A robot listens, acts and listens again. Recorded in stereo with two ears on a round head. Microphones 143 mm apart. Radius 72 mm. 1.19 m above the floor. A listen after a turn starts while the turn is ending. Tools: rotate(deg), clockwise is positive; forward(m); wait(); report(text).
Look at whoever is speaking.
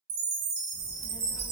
rotate(-40)
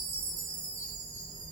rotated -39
rotate(-20)
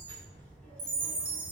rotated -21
rotate(-10)
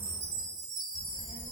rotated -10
rotate(-15)
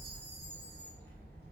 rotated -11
rotate(-10)
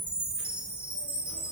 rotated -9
wait()
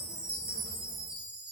wait()
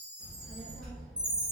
report("Facing the child speaking.")